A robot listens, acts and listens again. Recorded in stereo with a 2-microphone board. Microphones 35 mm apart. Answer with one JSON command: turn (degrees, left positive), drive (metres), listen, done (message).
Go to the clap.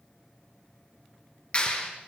{"turn": 35}
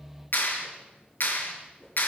{"turn": 110}
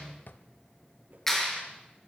{"turn": 10}
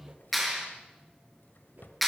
{"drive": 1.0}
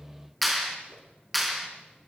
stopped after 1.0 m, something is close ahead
{"done": "Something is in my way. I am facing the clap but have not reached it."}